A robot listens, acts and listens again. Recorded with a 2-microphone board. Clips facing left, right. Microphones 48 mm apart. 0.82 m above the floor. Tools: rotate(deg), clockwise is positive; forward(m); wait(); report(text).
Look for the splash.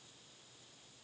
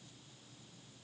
wait()
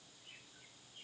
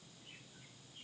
wait()
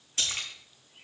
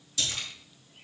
rotate(-45)
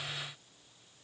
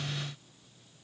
wait()
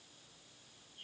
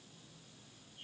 report("I heard a splash, but can't make it out now. It was about straight ahead or 90° left.")